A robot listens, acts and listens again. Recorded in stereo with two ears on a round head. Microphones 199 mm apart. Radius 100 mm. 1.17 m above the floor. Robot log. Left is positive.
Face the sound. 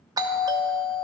note: The doorbell: about 15° right or 165° right.
cmd yaw -15
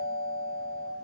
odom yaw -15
note: So it is at 150° right.
cmd yaw -150
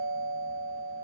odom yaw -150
note: The doorbell is now 15° left.
cmd yaw +15
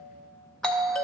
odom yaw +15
end: Facing the doorbell, under 1 m away.